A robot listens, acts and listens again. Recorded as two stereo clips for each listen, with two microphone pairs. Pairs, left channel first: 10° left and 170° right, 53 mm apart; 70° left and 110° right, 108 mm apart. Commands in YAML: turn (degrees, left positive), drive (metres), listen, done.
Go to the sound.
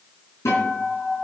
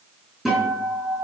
turn: -20
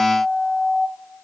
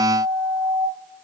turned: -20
drive: 1.0
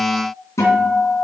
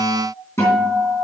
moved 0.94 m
drive: 1.0
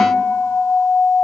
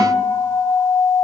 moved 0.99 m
drive: 1.0
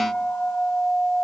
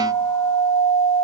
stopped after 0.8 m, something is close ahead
done: "I am next to the guitar."